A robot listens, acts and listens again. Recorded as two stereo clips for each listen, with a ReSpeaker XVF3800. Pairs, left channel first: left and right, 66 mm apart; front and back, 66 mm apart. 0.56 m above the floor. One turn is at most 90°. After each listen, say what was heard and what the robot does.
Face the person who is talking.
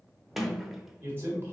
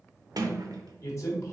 The man speaking: 40° right. Turn 40° right.
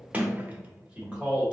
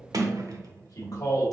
The man speaking is now 20° right. Turn 20° right.
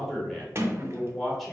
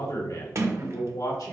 Facing the man speaking, 1 to 2 m away.